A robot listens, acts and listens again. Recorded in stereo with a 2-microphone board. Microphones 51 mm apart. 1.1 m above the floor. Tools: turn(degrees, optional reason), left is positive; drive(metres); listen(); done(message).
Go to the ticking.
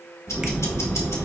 turn(degrees=70, reason="The ticking: about 70° left or 110° left.")
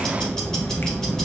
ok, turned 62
turn(degrees=10, reason="So it is at 10° left.")
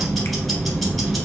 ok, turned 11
drive(metres=1.0)
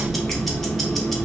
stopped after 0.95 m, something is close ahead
done("Arrived at the ticking, straight ahead.")